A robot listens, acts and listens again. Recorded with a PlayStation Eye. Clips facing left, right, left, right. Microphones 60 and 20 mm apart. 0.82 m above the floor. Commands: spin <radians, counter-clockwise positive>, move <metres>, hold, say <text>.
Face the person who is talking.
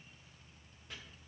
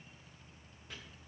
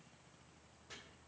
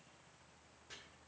hold
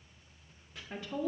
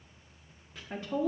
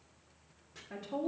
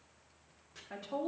spin -0.52
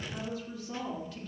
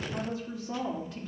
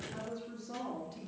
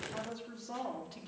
spin -2.01
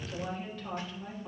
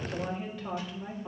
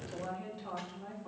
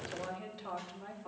spin -0.17
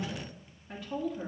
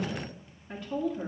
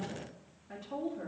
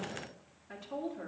say Found it: a woman speaking, straight ahead.